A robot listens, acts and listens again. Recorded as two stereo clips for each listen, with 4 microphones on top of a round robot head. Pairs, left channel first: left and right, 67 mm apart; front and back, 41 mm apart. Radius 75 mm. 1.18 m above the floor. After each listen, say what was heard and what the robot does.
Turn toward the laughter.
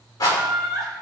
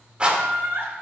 The laughter: straight behind. Turn 180° left.
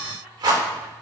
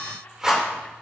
Keep listening.
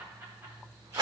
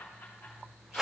Keep listening.
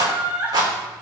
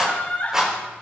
The laughter is now 35° right. Turn 35° right.
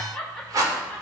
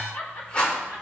Found it: laughter, straight ahead.